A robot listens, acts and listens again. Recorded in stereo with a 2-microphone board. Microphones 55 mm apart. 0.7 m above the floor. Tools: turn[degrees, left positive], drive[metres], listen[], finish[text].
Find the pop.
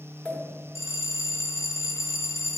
Thought: The pop: about 20° left or 160° left.
Action: turn[20]
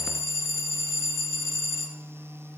Action: listen[]
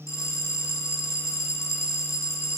Action: finish[I heard a pop, but can't make it out now. It was about straight ahead or 140° left.]